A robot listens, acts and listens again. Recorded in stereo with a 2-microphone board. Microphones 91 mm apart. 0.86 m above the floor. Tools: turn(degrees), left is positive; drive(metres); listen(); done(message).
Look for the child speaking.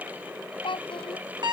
turn(degrees=65)
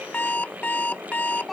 done("Found it: a child speaking, straight ahead.")